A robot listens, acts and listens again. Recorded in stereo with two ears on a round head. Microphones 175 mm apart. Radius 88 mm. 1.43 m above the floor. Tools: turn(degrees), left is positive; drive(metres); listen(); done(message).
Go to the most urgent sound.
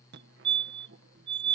turn(degrees=-60)
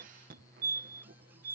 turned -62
turn(degrees=-50)
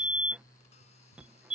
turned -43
drive(metres=1.0)
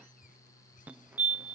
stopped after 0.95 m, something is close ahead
turn(degrees=-10)
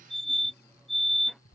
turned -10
done("Arrived at the fire alarm, straight ahead.")